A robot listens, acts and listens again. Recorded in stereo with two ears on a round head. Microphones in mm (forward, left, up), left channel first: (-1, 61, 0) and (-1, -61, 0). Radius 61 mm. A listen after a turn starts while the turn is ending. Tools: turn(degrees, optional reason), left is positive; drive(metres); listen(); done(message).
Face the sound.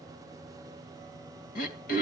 turn(degrees=65, reason="The throat clearing: about 65° left or 115° left.")
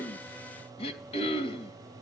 turn(degrees=45, reason="So it is at 45° left.")
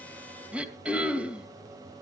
turn(degrees=-10, reason="The throat clearing is now 10° right.")
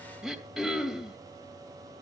done("Found it: throat clearing, straight ahead.")